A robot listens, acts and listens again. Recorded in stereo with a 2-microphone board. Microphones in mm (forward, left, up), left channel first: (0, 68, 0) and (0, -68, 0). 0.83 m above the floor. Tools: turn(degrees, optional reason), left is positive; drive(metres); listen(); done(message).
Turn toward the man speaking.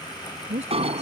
turn(degrees=-55, reason="The man speaking: about 55° right or 125° right.")
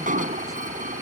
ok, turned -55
listen()
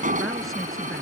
listen()
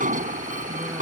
done("I heard a man speaking, but can't make it out now. It was about straight ahead or 70° right.")